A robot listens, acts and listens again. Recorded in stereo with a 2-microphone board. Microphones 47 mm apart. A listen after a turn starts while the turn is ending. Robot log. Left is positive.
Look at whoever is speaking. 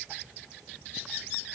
cmd idle
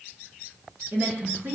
note: The woman speaking: about 45° right or 135° right.
cmd yaw -45
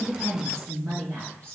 note: So it is at 70° right.
cmd yaw -70
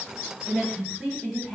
end: Facing the woman speaking.